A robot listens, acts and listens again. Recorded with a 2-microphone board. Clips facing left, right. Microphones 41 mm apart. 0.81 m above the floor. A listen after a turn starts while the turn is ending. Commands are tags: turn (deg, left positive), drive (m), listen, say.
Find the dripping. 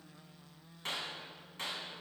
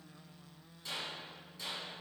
<listen/>
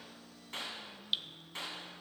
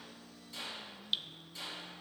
<turn deg="30"/>
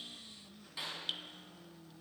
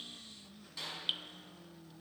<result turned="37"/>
<turn deg="-30"/>
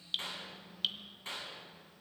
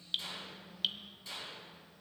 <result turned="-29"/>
<say>Found it: dripping, straight ahead, under 1 m away.</say>